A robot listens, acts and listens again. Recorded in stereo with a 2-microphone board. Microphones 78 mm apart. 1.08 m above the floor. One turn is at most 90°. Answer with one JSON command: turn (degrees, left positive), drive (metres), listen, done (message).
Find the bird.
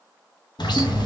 {"turn": 65}
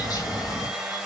{"turn": 50}
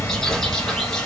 {"turn": 10}
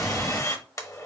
{"done": "Facing the bird, under 1 m away."}